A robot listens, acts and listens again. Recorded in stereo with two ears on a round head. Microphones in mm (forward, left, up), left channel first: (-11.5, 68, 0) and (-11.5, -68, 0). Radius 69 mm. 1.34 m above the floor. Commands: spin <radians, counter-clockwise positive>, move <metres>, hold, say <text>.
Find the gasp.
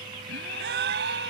spin -1.22
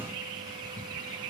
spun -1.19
hold
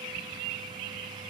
say I heard a gasp, but can't make it out now. It was about 5° right or 40° right.